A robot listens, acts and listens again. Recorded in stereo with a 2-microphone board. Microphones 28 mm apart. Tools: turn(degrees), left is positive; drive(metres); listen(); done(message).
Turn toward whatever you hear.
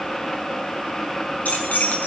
turn(degrees=90)
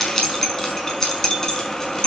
turn(degrees=25)
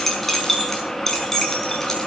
turn(degrees=15)
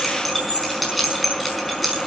done("Found it: keys jangling, straight ahead.")